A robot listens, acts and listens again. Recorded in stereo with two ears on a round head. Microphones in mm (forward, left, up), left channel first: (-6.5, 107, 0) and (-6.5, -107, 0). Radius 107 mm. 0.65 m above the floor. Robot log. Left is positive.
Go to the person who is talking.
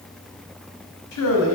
note: The man speaking: about 65° left or 115° left.
cmd yaw +65
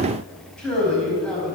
cmd fwd 1.0
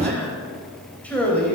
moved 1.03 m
cmd fwd 1.0
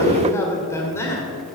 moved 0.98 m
note: The man speaking is now 10° left.
cmd yaw +10
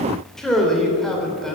cmd fwd 1.0
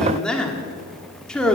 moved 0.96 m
cmd fwd 1.0
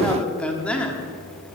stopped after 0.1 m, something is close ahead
end: Arrived at the man speaking, straight ahead.